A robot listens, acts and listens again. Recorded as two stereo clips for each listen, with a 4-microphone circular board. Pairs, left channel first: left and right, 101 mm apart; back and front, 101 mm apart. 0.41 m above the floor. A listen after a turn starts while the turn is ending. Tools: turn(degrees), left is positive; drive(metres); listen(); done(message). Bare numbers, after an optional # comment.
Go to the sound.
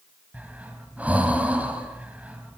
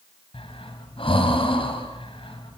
# The breathing: 165° right.
turn(-165)
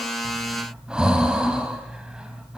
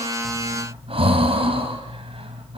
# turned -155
# The breathing is now 10° right.
turn(-10)
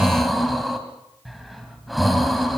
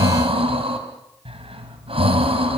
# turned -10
drive(1.0)
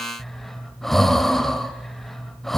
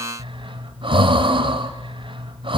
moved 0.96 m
drive(1.0)
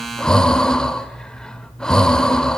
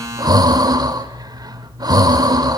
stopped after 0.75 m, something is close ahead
# The breathing is now 10° left.
turn(10)
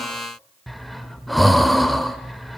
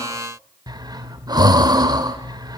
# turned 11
done("I am next to the breathing.")